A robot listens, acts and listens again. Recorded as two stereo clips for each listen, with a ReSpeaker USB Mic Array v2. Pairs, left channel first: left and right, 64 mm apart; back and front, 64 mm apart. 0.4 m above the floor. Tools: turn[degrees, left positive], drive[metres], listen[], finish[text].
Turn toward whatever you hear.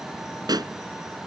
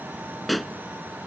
Thought: The pop: 90° right.
Action: turn[-90]
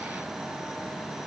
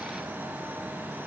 Action: finish[Facing where the pop came from. I can't hear it now.]